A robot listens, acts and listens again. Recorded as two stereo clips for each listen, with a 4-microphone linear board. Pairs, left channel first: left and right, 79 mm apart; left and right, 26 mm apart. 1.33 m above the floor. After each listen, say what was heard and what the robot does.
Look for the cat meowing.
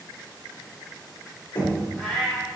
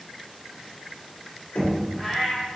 Turn 30° left.
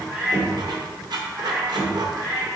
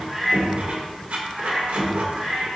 So it is at 45° right. Turn 45° right.
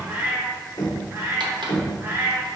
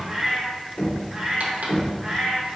The cat meowing is now 30° right. Turn 30° right.
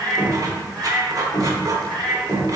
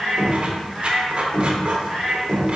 The cat meowing is now 10° left. Turn 10° left.
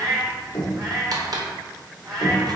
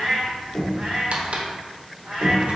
Facing the cat meowing, 2 to 4 m away.